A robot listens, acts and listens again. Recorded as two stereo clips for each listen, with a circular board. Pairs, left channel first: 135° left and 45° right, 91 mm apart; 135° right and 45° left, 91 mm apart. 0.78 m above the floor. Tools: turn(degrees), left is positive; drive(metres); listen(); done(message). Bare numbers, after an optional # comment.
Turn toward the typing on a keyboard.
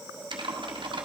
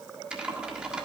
# The typing on a keyboard: 35° right.
turn(-35)
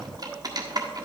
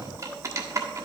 done("Found it: typing on a keyboard, straight ahead.")